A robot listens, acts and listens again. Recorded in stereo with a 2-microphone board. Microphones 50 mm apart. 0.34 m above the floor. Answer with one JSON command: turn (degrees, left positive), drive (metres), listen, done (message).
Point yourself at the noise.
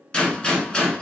{"turn": 20}
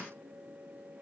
{"listen": true}
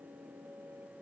{"done": "I heard a gunshot, but can't make it out now. It was about straight ahead or 140° left."}